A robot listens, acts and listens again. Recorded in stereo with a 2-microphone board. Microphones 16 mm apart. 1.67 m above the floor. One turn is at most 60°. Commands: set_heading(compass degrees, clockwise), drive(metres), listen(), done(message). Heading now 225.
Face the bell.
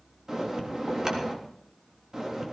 set_heading(260)
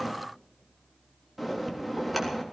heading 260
done("Facing the bell.")